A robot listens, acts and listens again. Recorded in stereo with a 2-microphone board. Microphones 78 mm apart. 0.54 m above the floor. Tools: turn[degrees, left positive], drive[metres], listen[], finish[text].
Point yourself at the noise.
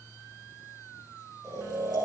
Thought: The snoring: about 60° right or 120° right.
Action: turn[-60]
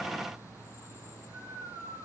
Thought: So it is at 60° right.
Action: turn[-60]
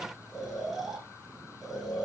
Action: finish[Found it: snoring, straight ahead.]